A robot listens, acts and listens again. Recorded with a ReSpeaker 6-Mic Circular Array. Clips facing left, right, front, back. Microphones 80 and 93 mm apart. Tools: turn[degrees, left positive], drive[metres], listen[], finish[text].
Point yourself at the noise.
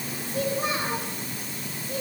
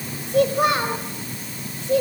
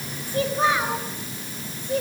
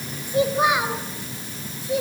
Thought: The child speaking: 95° right.
Action: turn[-95]
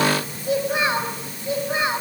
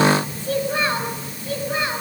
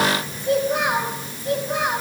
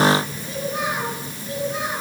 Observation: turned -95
Thought: The child speaking is now 20° left.
Action: turn[20]
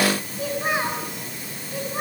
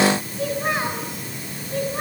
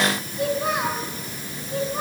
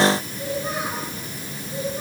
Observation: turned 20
Action: finish[Found it: a child speaking, straight ahead, over 4 m away.]